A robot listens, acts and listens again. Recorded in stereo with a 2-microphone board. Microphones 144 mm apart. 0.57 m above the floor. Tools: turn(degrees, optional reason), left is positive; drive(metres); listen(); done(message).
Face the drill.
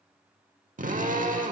turn(degrees=-70, reason="The drill: about 70° right or 110° right.")
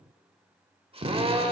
turn(degrees=-45, reason="So it is at 45° right.")
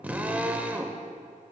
turn(degrees=-10, reason="The drill is now 10° right.")
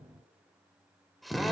done("Found it: a drill, straight ahead, under 1 m away.")